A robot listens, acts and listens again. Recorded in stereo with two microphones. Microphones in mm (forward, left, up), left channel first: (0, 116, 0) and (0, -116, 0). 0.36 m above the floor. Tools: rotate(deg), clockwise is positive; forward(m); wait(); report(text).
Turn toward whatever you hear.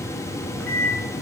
rotate(-30)
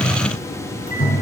rotate(-145)
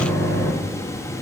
rotate(-10)
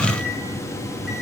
wait()
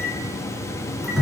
report("Facing the microwave.")